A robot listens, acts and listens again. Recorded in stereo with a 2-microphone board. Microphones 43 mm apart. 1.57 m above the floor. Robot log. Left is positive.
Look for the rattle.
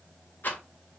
note: The rattle: about 50° left or 130° left.
cmd yaw +50
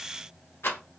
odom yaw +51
note: So it is at 80° left.
cmd yaw +80
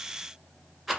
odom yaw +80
end: Found it: a rattle, straight ahead.